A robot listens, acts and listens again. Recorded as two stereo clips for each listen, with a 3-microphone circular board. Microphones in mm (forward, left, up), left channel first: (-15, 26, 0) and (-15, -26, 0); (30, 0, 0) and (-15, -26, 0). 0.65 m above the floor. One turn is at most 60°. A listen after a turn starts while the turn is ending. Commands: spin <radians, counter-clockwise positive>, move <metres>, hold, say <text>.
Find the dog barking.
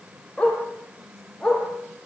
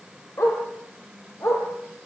spin 0.17
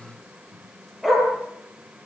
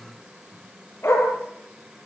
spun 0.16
say Facing the dog barking, over 4 m away.